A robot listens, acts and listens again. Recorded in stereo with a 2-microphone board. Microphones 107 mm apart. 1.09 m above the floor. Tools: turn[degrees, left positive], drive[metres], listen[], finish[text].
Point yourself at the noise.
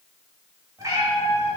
Thought: The cat meowing: about 30° right or 150° right.
Action: turn[-30]
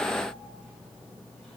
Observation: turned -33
Action: listen[]
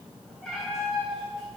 Action: finish[Found it: a cat meowing, straight ahead.]